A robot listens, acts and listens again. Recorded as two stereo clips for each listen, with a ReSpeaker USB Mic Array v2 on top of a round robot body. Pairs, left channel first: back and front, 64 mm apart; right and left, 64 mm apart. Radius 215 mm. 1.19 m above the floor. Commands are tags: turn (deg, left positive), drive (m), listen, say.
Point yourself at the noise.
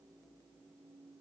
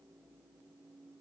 <listen/>
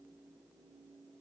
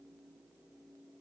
<listen/>
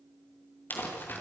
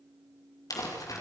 <turn deg="-120"/>
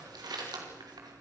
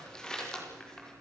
<turn deg="-10"/>
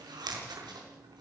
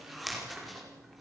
<say>Found it: crumpling, straight ahead.</say>